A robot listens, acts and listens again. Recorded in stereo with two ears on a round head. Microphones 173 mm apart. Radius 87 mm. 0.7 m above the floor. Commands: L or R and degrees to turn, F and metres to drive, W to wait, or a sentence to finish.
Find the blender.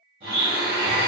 R30
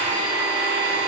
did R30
R115
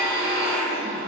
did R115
L10
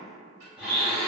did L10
Found it: a blender, straight ahead.